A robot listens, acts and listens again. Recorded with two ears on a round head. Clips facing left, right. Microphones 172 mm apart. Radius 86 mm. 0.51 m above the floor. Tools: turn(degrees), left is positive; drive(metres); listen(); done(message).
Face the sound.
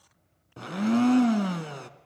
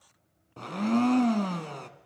turn(degrees=30)
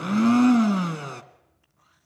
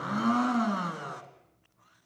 turn(degrees=140)
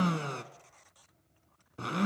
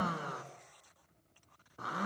turn(degrees=40)
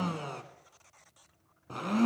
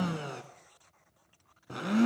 turn(degrees=-10)
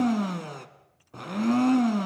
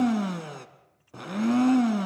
done("Facing the blender, 1 to 2 m away.")